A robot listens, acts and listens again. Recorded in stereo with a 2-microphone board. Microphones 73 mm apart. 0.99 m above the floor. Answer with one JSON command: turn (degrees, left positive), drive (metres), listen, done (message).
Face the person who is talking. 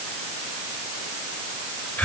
{"listen": true}
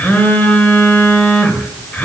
{"listen": true}
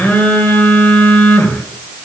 {"done": "I can't make out anyone speaking, only a phone buzzing."}